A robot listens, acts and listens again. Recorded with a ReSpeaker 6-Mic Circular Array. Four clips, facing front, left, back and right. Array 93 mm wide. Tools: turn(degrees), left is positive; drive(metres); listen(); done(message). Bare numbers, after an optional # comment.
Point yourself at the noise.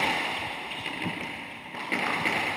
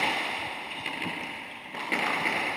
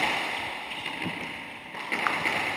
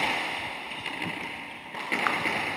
listen()
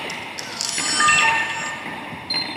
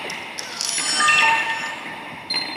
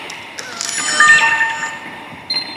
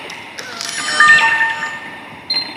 # The camera shutter: 130° right.
turn(-130)
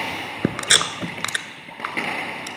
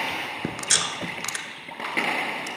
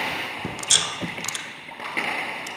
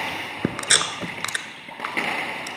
# The camera shutter is now 25° right.
turn(-25)
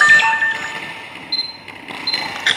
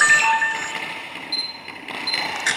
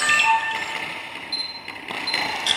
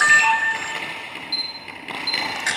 # The camera shutter is now 10° left.
turn(10)
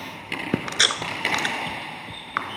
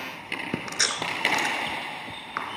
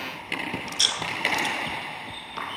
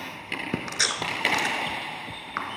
done("Found it: a camera shutter, straight ahead, under 1 m away.")